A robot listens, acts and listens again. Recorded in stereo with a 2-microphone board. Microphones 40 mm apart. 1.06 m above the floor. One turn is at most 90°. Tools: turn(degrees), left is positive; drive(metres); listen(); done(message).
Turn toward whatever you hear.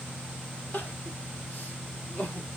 turn(degrees=55)
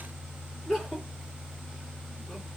done("Found it: crying, straight ahead, 1 to 2 m away.")